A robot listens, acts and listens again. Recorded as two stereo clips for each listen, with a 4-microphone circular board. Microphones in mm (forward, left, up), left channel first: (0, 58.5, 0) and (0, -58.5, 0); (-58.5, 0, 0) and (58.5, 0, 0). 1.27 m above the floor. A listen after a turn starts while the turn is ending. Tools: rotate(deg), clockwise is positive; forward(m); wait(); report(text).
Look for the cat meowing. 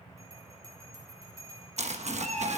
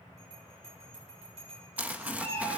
rotate(105)
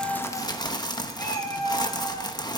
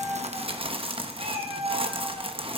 rotate(-10)
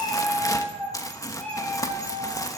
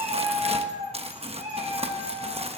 report("Found it: a cat meowing, straight ahead.")